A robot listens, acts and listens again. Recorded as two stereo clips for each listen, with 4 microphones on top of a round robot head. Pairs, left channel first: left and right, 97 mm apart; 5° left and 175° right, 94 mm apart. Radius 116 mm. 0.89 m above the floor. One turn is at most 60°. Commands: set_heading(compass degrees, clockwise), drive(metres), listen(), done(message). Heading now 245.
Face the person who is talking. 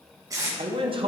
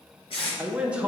set_heading(305)
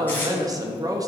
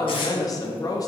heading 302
set_heading(342)
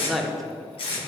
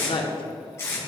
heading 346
done("Facing the man speaking, under 1 m away.")